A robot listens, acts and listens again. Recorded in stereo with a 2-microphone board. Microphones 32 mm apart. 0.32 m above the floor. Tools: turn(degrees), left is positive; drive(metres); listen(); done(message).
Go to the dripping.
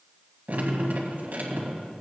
turn(degrees=-60)
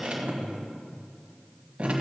turn(degrees=-45)
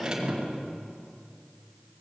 turn(degrees=-25)
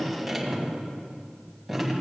drive(metres=1.0)
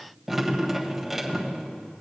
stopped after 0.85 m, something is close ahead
done("Arrived at the dripping, straight ahead.")